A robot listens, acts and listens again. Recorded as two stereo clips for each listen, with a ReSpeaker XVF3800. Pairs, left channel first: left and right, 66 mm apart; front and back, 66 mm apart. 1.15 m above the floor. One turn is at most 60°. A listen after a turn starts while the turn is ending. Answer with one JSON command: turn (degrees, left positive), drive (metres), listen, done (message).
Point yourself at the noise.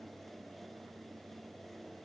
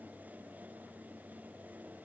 {"listen": true}
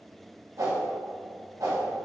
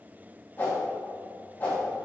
{"turn": -60}
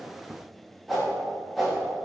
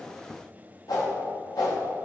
{"done": "Found it: a whoosh, straight ahead, 1 to 2 m away."}